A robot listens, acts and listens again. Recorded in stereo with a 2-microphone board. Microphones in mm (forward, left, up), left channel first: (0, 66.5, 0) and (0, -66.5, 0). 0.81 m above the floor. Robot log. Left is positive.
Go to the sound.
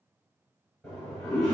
cmd yaw +30
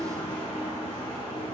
note: So it is at 145° left.
cmd yaw +145
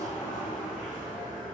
note: The toilet flushing is now 15° left.
cmd yaw +15
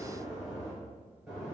cmd fwd 1.0
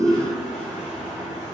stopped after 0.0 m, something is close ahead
end: Blocked. The toilet flushing is further on, straight ahead.